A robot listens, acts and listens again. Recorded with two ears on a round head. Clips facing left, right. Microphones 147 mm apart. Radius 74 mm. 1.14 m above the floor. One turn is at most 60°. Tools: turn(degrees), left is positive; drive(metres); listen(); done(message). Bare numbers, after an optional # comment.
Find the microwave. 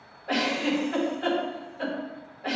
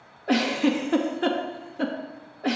listen()
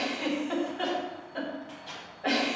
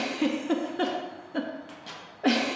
# The microwave: about 65° right or 115° right.
turn(-60)
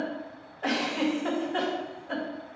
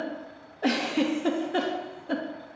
listen()
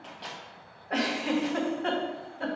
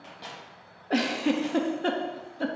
# So it is at 10° right.
turn(-10)
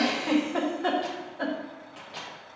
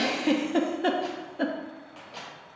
done("Found it: a microwave, straight ahead, 1 to 2 m away.")